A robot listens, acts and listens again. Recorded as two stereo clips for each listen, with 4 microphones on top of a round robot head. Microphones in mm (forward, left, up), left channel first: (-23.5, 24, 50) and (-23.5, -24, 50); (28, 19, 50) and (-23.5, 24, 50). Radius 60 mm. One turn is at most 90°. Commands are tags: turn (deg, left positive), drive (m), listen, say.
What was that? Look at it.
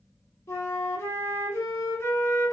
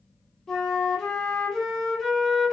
<turn deg="80"/>
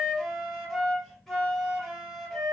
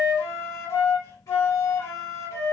<say>Found it: a flute, straight ahead, 1 to 2 m away.</say>